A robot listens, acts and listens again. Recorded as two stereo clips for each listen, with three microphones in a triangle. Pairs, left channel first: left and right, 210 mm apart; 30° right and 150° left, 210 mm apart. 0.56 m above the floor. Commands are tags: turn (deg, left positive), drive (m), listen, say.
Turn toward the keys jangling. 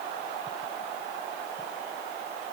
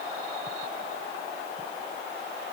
<listen/>
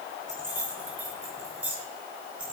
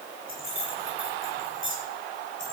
<say>Facing the keys jangling, over 4 m away.</say>